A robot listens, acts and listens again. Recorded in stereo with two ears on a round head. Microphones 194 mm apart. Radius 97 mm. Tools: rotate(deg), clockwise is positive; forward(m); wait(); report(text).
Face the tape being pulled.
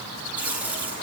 rotate(30)
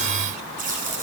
rotate(140)
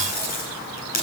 rotate(-40)
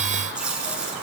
report("Facing the tape being pulled, over 4 m away.")